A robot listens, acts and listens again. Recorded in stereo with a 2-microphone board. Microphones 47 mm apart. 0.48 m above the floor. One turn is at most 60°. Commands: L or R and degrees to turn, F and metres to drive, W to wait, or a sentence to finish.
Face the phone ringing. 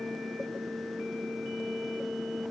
W
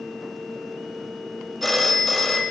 L30
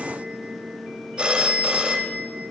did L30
R20
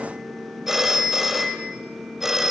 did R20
R10
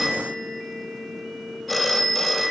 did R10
Found it: a phone ringing, straight ahead.